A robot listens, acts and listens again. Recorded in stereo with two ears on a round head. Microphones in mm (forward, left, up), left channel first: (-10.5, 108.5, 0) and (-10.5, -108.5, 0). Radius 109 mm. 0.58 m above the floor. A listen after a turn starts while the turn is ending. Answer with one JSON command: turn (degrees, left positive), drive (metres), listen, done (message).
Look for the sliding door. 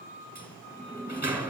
{"turn": -30}
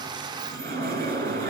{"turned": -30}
{"turn": -140}
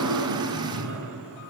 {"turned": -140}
{"turn": -60}
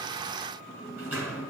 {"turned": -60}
{"turn": -10}
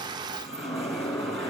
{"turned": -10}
{"done": "Facing the sliding door, 2 to 4 m away."}